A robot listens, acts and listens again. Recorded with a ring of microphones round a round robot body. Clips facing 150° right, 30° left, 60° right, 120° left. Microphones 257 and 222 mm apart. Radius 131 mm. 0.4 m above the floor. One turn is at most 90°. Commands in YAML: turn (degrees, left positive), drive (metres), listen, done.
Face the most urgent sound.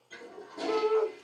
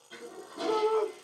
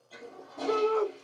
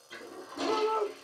turn: -15
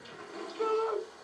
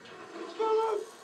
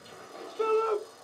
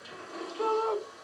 done: "Found it: a shout, straight ahead."